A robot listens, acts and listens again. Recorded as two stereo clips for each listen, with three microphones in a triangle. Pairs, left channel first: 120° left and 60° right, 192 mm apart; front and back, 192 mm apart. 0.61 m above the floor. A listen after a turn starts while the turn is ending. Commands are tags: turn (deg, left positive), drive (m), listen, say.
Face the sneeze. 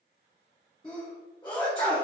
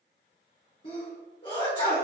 <turn deg="60"/>
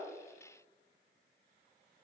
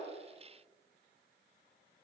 <say>Facing where the sneeze came from. I can't hear it now.</say>